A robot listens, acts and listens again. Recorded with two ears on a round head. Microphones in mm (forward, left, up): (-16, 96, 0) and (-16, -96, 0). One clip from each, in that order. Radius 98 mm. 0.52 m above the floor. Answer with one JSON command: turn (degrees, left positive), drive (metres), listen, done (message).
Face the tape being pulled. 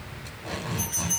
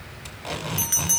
{"turn": -90}
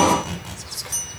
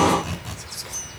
{"turn": 10}
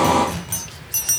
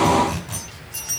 {"done": "Facing the tape being pulled."}